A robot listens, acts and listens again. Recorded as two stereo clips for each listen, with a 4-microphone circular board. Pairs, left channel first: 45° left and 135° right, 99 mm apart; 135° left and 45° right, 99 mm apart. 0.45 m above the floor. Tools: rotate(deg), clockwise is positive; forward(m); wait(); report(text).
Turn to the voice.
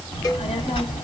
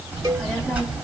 rotate(-30)
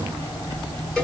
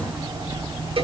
report("Facing the child speaking, 2 to 4 m away.")